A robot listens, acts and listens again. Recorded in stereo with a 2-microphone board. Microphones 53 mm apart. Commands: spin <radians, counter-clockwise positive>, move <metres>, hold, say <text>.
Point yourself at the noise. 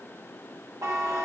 spin -1.13
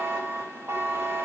spin -0.87
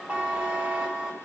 spin -0.35
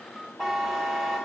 say Facing the buzzer.